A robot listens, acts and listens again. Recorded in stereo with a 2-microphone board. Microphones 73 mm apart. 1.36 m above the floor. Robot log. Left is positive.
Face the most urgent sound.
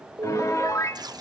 note: The alarm: about 35° right or 145° right.
cmd yaw -35
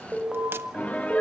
end: Found it: an alarm, straight ahead.